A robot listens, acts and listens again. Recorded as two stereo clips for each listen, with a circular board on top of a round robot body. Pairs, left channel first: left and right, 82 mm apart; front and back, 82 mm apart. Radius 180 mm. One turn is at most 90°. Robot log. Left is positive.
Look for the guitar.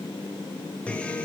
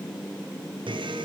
note: The guitar: 165° left.
cmd yaw +90
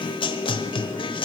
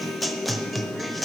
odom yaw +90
note: The guitar is now 90° left.
cmd yaw +90
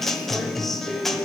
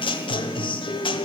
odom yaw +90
end: Facing the guitar.